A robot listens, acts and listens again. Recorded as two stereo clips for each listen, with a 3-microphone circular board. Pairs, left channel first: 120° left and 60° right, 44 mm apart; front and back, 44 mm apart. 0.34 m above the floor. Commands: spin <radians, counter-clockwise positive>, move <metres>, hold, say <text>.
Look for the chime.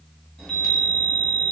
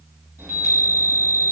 spin -2.79
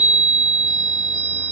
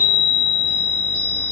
spin 0.35
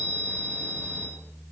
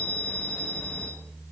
say Facing the chime.